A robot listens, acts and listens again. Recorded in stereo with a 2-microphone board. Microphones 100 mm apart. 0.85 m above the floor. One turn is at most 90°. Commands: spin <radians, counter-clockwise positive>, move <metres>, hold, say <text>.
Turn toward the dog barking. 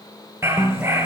spin -0.44
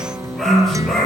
say Facing the dog barking.